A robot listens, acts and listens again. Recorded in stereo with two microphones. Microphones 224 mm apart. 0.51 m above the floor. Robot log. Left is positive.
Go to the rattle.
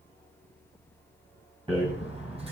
note: The rattle: about 25° right or 155° right.
cmd yaw -25
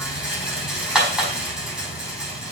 cmd fwd 1.0
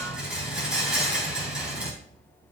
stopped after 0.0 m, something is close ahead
end: Something is in my way. I am facing the rattle but have not reached it.